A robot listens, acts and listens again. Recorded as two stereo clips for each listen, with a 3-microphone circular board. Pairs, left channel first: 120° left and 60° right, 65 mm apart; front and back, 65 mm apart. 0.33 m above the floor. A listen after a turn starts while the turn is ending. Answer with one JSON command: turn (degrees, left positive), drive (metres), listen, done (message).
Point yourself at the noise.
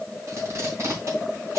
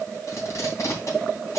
{"turn": -30}
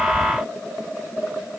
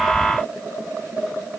{"listen": true}
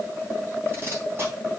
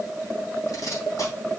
{"turn": -15}
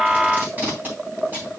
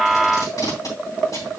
{"done": "Facing the tape being pulled."}